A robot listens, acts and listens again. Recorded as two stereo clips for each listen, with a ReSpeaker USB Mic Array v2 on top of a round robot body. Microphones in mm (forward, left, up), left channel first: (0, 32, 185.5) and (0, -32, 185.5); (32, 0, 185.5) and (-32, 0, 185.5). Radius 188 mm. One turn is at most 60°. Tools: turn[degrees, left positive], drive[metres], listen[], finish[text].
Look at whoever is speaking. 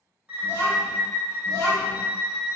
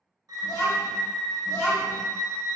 Thought: The child speaking: 45° left.
Action: turn[45]
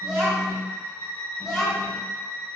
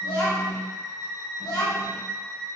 Thought: The child speaking is now 10° right.
Action: turn[-10]
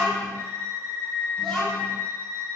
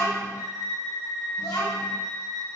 Action: finish[Found it: a child speaking, straight ahead, 1 to 2 m away.]